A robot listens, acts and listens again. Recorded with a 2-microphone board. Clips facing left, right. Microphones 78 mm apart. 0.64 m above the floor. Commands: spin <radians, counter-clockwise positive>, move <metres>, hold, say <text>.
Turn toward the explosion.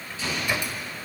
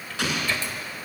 spin -1.57
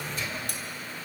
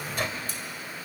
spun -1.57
say Facing where the explosion came from. I can't hear it now.